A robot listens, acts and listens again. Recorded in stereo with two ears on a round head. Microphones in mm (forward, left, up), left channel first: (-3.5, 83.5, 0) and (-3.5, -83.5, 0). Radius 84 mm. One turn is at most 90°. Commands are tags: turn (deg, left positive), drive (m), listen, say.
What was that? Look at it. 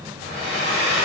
<turn deg="30"/>
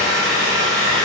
<turn deg="-25"/>
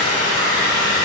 <turn deg="-10"/>
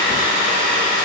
<say>Found it: a hair dryer, straight ahead, 1 to 2 m away.</say>